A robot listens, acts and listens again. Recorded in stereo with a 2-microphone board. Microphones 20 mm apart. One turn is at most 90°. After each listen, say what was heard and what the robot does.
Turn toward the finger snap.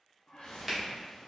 Turn 30° left.
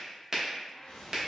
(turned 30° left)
So it is at 20° right. Turn 20° right.
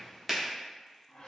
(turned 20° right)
Facing the finger snap.